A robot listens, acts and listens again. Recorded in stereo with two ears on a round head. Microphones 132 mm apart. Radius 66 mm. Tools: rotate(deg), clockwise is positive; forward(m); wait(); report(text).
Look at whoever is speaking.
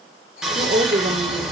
rotate(60)
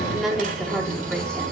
report("Found it: a woman speaking, straight ahead, 2 to 4 m away.")